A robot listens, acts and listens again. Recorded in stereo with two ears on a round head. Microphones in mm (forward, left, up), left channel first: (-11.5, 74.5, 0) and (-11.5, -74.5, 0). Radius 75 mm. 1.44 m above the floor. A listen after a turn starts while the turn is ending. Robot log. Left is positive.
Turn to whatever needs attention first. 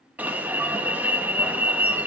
cmd yaw -30
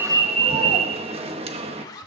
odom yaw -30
note: So it is at 140° right.
cmd yaw -140
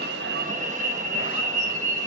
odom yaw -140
note: The alarm is now 50° right.
cmd yaw -50
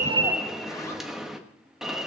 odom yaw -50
end: Found it: an alarm, straight ahead, 1 to 2 m away.